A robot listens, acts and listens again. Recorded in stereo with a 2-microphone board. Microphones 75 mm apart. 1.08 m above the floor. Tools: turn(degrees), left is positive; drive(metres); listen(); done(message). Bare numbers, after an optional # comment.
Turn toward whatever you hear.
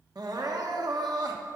# The crying: about 60° right or 120° right.
turn(-60)
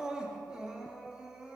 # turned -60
# So it is at 10° right.
turn(-10)
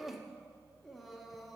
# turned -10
done("Found it: crying, straight ahead, under 1 m away.")